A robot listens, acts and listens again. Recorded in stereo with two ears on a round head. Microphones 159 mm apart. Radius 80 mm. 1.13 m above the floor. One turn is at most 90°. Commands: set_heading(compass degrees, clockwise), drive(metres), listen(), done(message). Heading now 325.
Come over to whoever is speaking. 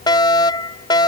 listen()
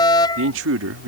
set_heading(55)
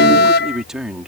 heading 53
drive(1.0)
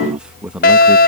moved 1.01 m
drive(1.0)
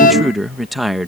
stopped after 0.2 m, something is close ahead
done("Arrived at the man speaking, straight ahead.")